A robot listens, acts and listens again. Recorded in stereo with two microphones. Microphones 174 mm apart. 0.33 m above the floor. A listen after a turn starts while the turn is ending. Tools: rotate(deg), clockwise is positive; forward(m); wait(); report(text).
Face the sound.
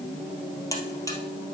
rotate(-15)
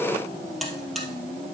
report("Found it: a buzzer, straight ahead.")